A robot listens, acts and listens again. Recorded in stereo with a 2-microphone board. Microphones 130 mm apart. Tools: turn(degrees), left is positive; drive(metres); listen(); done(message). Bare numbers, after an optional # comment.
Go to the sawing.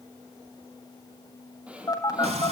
turn(-30)
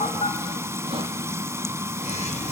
listen()
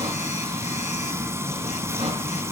listen()
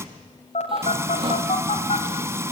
done("I heard sawing, but can't make it out now. It was about 20° left or 140° right. I did not reach it.")